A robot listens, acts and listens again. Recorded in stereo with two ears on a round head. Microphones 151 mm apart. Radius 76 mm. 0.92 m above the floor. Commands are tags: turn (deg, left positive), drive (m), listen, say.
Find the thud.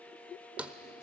<turn deg="-30"/>
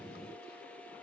<listen/>
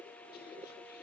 <say>I heard a thud, but can't make it out now. It was about 20° left or 140° right.</say>